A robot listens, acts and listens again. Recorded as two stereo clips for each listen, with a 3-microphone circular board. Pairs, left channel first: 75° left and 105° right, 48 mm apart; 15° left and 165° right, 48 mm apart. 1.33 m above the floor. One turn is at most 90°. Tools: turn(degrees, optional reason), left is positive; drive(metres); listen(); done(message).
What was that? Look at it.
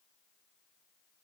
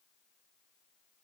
listen()
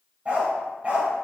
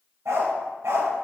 turn(degrees=-90, reason="The dog barking: 165° right.")
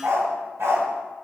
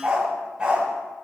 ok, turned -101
turn(degrees=-90, reason="The dog barking is now 95° right.")
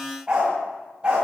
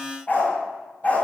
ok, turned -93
turn(degrees=-35, reason="The dog barking is now 35° right.")
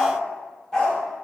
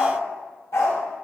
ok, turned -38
done("Found it: a dog barking, straight ahead.")